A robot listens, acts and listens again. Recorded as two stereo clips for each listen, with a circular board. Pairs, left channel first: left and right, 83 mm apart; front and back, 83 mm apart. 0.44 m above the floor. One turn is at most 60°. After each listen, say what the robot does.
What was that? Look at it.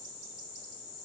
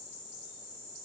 Keep listening.
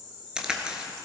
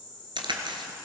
Turn 60° right.
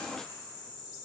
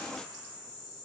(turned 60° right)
Turn 60° right.
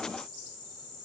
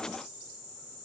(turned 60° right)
Turn 50° right.
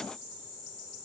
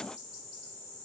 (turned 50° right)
I heard a crack from this way, but can't make it out now.